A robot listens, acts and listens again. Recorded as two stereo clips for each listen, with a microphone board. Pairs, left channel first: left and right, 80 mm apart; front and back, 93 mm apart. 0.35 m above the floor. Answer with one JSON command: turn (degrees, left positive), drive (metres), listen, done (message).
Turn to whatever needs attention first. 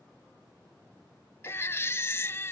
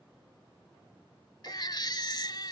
{"turn": 35}
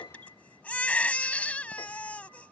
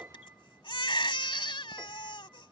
{"turn": 20}
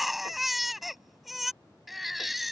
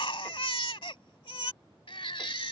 {"done": "Facing the baby crying."}